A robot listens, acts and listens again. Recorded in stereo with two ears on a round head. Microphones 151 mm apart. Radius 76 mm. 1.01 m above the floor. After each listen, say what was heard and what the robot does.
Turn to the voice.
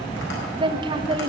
The woman speaking: about 30° right or 150° right. Turn 30° right.
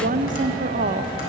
So it is at 120° right. Turn 120° right.
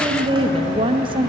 The woman speaking is now 35° right. Turn 35° right.
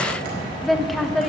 Facing the woman speaking, under 1 m away.